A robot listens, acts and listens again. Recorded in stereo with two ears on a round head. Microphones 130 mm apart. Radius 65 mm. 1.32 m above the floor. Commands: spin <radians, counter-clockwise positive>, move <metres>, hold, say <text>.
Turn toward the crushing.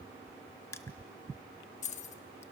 spin 0.35
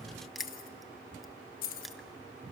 hold
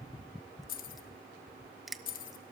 say Found it: crushing, straight ahead.